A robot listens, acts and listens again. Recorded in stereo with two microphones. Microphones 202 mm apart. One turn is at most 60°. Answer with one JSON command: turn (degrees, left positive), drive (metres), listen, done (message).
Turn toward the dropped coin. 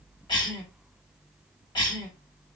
{"listen": true}
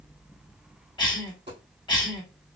{"turn": -60}
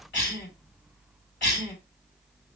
{"listen": true}
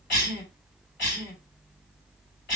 {"done": "I heard a dropped coin, but can't make it out now. It was about straight ahead or 60° right."}